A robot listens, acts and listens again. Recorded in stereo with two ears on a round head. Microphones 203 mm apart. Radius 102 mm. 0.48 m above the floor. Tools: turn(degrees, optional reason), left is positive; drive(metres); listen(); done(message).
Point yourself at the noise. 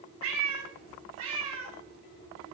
turn(degrees=-70, reason="The cat meowing: about 70° right or 110° right.")
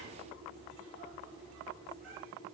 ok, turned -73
done("Facing the cat meowing, 1 to 2 m away.")